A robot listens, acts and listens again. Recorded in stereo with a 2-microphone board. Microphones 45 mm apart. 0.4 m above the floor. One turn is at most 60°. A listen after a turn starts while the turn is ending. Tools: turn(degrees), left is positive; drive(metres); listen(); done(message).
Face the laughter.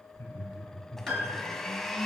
turn(degrees=60)
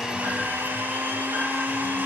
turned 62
listen()
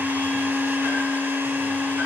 listen()
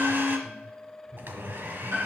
turn(degrees=-50)
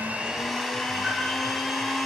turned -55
listen()
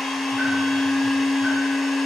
listen()
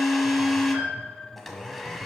done("I heard laughter from this way, but can't make it out now.")